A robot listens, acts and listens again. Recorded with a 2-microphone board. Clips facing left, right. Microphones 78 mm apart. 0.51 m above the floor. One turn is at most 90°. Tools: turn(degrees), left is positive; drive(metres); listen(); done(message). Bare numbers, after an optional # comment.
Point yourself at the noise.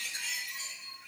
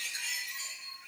listen()
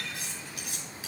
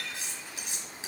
# The cutlery clinking: about 25° right or 155° right.
turn(-25)
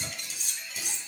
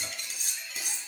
# So it is at 130° right.
turn(-90)
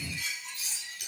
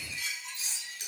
# The cutlery clinking is now 30° right.
turn(-30)
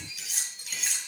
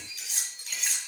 done("Found it: cutlery clinking, straight ahead.")